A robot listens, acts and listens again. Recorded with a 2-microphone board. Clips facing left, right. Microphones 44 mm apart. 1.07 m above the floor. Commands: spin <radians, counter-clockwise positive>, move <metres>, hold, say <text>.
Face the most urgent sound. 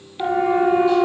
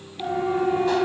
spin 0.44
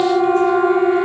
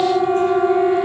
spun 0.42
say Found it: a siren, straight ahead.